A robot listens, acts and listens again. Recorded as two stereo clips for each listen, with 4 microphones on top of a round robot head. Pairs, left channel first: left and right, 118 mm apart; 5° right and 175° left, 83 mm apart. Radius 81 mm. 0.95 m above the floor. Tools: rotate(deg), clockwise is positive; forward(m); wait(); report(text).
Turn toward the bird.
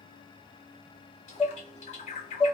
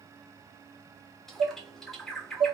rotate(-80)
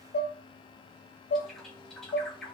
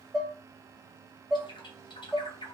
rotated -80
report("Facing the bird, under 1 m away.")